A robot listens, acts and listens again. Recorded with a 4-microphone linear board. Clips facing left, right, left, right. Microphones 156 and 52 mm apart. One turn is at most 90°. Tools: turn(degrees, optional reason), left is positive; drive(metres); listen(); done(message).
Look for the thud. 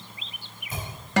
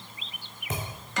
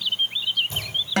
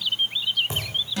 turn(degrees=-90)
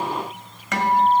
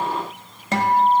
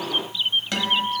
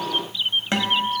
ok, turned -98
turn(degrees=10, reason="Nothing new. It was at 10° left.")
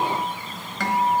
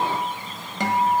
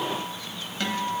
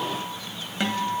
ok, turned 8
done("I heard a thud from this way, but can't make it out now.")